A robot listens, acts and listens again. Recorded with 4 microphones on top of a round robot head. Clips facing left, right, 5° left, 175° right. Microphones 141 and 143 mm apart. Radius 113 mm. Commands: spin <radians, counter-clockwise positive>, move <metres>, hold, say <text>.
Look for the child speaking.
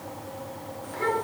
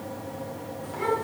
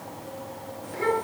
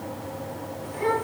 spin -0.17
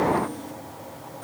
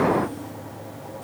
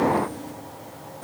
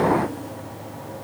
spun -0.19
hold
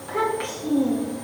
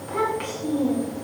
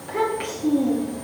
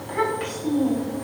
spin -0.17
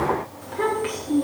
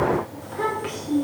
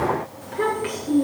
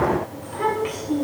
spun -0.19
say Facing the child speaking.